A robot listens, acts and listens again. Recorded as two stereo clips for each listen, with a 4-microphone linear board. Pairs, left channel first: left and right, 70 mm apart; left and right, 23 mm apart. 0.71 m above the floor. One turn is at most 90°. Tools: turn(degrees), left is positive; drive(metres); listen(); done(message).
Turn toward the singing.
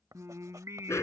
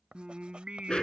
turn(degrees=-45)
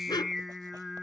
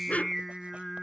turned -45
done("Found it: singing, straight ahead.")